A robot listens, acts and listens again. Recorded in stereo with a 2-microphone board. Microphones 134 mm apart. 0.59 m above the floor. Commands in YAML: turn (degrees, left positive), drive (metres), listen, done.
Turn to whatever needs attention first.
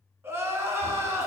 turn: -20
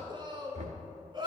turn: -140
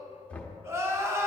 turn: -20
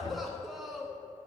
done: "Facing the crying, under 1 m away."